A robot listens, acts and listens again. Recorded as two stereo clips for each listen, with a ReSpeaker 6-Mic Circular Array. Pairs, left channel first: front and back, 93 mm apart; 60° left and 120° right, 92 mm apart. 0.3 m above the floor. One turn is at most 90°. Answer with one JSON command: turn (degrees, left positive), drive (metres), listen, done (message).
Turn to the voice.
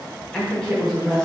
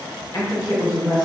{"turn": 80}
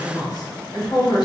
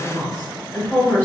{"done": "Found it: a woman speaking, straight ahead, 1 to 2 m away."}